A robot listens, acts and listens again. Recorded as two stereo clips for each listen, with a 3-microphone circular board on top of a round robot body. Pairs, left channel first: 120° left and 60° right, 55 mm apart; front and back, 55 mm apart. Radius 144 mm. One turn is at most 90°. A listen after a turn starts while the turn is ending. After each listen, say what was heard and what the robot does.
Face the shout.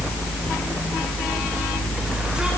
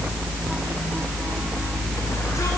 Keep listening.
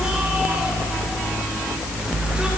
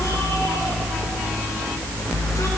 Keep listening.
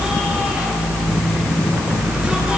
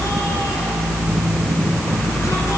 I can't make out a shout to turn to.